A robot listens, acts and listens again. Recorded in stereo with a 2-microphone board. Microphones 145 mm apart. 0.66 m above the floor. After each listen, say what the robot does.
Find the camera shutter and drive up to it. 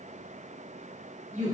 Keep listening.
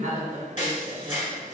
Turn 60° left.
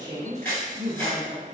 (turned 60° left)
Turn 15° left.
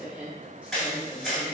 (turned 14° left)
Drive 1.0 m forward.
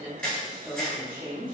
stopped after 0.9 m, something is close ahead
Turn 10° left.
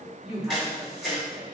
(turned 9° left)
Arrived at the camera shutter, straight ahead.